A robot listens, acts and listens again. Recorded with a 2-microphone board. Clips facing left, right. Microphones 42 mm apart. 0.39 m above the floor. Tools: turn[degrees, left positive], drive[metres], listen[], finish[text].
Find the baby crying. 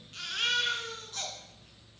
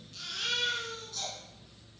Thought: The baby crying: about 40° left or 140° left.
Action: turn[40]
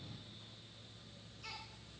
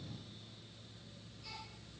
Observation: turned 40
Action: listen[]
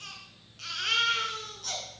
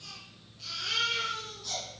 Thought: So it is at 100° left.
Action: turn[100]
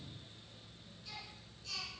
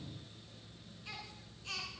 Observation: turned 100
Thought: The baby crying is now 35° right.
Action: turn[-35]
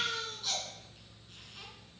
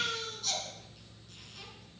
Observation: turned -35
Thought: The baby crying is now 20° left.
Action: turn[20]
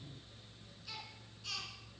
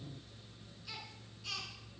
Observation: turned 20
Action: finish[Found it: a baby crying, straight ahead.]